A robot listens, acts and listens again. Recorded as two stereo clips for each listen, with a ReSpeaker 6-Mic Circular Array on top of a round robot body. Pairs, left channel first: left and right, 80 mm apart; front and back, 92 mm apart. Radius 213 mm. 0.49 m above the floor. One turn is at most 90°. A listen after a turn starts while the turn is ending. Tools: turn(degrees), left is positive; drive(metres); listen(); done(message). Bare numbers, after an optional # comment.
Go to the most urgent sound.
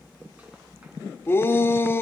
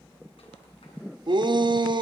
# The shout: 150° left.
turn(90)
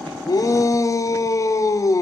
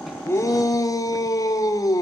# The shout is now 50° left.
turn(50)
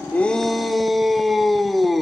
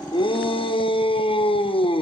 drive(1.0)
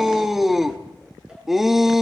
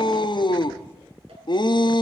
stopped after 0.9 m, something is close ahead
done("I am next to the shout.")